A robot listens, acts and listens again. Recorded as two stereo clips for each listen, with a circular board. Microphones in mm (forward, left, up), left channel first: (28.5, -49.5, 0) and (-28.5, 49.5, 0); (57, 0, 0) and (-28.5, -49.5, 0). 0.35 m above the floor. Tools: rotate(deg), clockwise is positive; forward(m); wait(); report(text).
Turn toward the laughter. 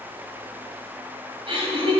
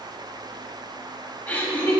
rotate(-95)
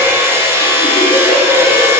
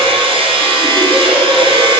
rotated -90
wait()
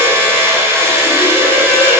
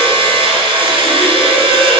wait()
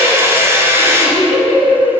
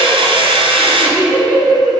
rotate(45)
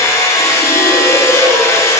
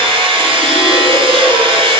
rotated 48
wait()
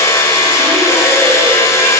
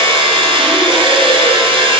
wait()
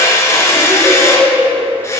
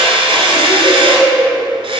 report("Found it: laughter, straight ahead, 2 to 4 m away.")